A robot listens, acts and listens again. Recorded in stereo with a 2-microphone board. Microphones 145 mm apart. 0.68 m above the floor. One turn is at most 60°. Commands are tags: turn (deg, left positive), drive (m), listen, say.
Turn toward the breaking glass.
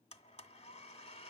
<listen/>
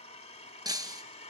<turn deg="-25"/>
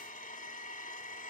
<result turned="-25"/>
<listen/>
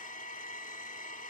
<say>I heard breaking glass, but can't make it out now. It was about straight ahead or 130° right.</say>